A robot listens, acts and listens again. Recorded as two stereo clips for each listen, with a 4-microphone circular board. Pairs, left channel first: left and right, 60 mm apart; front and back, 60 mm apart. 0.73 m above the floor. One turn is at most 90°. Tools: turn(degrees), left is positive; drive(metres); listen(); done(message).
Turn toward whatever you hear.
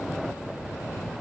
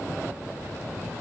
listen()
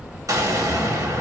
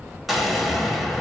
turn(degrees=-90)
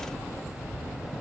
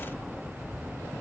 done("Facing where the explosion came from. I can't hear it now.")